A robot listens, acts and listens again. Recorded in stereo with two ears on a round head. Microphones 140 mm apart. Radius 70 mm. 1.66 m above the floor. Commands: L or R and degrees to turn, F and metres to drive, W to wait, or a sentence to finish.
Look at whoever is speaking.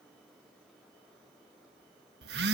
W
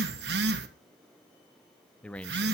L30
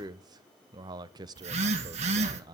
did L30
R25
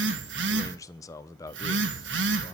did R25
L20
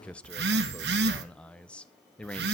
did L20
Facing the man speaking.